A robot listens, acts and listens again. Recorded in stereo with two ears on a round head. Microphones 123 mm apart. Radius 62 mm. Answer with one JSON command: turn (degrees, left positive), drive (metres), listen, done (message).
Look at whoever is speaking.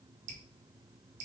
{"listen": true}
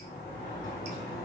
{"listen": true}
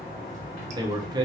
{"turn": -30}
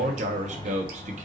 {"turn": -120}
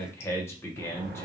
{"turn": 20}
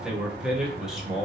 {"done": "Facing the man speaking."}